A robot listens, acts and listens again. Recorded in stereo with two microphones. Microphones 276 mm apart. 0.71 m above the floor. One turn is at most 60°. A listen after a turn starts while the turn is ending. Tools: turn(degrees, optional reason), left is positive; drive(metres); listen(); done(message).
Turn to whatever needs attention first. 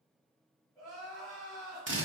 turn(degrees=30)
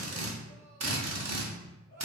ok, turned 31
listen()
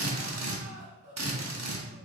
turn(degrees=60, reason="So it is at 135° left.")
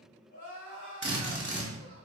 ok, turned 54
turn(degrees=60, reason="The crying is now 80° left.")
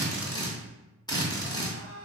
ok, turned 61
turn(degrees=20, reason="The crying is now 20° left.")
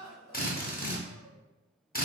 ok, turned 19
done("Found it: crying, straight ahead, 1 to 2 m away.")